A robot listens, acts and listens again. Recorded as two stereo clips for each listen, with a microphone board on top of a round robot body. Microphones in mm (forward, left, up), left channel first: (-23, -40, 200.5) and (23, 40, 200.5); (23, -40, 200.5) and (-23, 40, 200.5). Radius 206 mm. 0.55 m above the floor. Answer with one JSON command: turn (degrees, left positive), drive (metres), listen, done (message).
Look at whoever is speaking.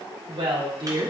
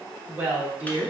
{"turn": 45}
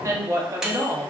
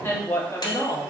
{"done": "Found it: a woman speaking, straight ahead."}